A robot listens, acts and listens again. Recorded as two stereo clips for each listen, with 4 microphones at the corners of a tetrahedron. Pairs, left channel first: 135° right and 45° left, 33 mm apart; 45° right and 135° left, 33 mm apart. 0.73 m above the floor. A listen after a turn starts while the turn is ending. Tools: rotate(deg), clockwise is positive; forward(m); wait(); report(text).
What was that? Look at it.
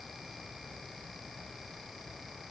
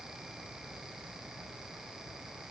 wait()
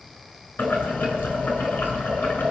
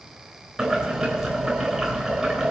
rotate(145)
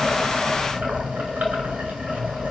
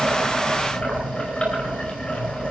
rotate(-10)
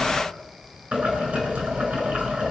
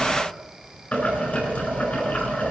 report("Found it: boiling, straight ahead.")